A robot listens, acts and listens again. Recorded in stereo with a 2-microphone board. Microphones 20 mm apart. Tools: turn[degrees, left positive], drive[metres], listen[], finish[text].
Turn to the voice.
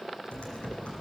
Action: listen[]
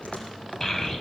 Thought: The child speaking: about 30° left or 150° left.
Action: turn[30]
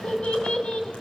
Thought: So it is at 100° left.
Action: turn[100]
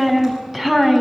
Thought: The child speaking is now 15° right.
Action: turn[-15]
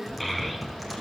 Action: finish[Found it: a child speaking, straight ahead.]